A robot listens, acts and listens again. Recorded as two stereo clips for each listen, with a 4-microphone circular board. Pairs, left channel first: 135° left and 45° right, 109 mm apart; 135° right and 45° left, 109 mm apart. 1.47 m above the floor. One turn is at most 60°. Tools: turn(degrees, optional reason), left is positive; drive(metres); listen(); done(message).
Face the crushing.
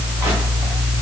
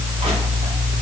listen()
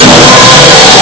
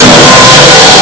listen()
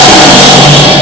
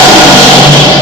done("I can't make out crushing, only sawing.")